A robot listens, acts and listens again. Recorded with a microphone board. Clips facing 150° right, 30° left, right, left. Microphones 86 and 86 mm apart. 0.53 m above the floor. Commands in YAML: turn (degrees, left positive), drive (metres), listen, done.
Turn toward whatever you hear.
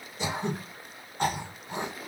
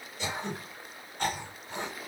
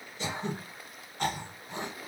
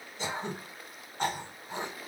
turn: 150
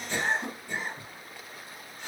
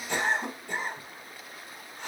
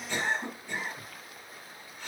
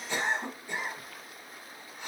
turn: 20
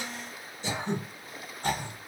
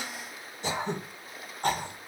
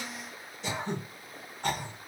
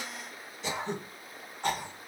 done: "Facing the throat clearing, 1 to 2 m away."